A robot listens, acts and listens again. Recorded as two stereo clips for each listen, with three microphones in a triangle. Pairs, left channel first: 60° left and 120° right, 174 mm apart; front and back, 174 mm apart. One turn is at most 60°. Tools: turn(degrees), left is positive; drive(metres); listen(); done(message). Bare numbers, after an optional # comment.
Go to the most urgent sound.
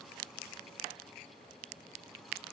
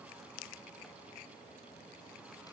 listen()
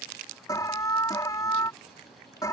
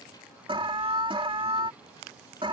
# The alarm: 125° left.
turn(60)
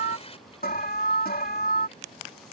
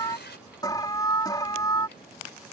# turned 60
# The alarm is now 65° left.
turn(60)
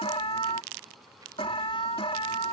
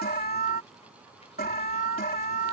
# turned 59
drive(1.0)
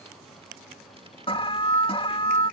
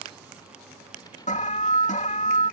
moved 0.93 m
# The alarm is now 15° left.
turn(15)
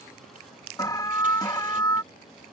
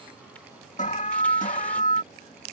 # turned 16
drive(1.0)
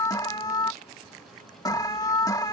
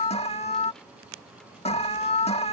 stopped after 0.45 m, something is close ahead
done("Arrived at the alarm, straight ahead.")